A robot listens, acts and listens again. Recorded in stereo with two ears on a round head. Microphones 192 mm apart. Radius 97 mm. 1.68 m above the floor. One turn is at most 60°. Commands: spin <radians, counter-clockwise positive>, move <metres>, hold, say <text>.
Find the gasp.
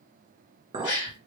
spin 1.05
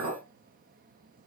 spin 0.52
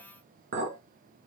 say I heard a gasp from this way, but can't make it out now.